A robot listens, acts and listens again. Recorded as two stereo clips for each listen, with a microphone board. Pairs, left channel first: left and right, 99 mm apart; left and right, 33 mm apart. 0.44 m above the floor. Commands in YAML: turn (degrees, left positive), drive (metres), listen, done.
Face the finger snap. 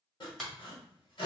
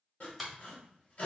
turn: 30
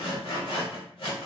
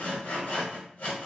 listen: true
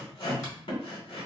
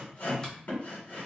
listen: true
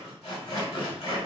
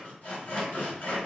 done: "I heard a finger snap, but can't make it out now. It was about 25° right or 145° left."